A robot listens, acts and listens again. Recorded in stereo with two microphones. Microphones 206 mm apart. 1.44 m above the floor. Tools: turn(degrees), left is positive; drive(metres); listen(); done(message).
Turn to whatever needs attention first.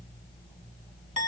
listen()
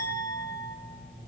listen()
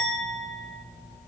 done("I can't make out anything urgent to turn to.")